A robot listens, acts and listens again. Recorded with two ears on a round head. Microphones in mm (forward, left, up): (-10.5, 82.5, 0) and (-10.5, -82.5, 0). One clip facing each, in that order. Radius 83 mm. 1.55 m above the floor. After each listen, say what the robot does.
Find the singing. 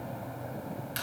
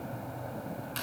Keep listening.
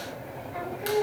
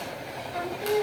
Turn 50° right.
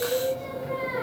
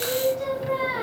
Turn 65° right.
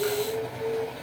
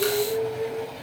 Found it: singing, straight ahead.